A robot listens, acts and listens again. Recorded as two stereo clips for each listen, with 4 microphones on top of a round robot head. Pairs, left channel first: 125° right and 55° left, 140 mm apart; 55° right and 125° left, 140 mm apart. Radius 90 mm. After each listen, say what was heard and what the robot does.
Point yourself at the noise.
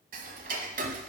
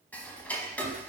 The ticking: 25° left. Turn 25° left.
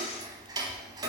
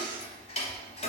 Found it: ticking, straight ahead, under 1 m away.